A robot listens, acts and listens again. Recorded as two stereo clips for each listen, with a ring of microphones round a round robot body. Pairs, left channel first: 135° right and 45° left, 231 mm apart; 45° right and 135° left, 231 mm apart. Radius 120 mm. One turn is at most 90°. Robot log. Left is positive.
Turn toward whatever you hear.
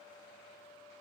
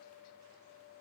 cmd idle
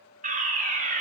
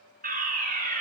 note: The fire alarm: 95° left.
cmd yaw +90
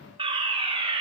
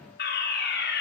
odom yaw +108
note: The fire alarm is now 15° right.
cmd yaw -15
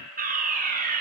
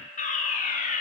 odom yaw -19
end: Found it: a fire alarm, straight ahead.